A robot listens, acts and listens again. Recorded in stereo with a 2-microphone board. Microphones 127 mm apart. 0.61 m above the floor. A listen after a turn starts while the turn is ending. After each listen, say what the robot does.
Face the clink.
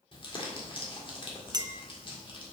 Turn 30° right.
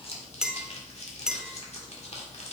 Facing the clink.